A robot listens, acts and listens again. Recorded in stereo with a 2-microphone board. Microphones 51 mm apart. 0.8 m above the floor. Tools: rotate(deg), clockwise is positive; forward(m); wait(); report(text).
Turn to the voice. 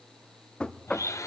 wait()
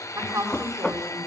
rotate(90)
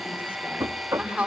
rotate(10)
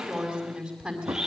report("Facing the woman speaking, over 4 m away.")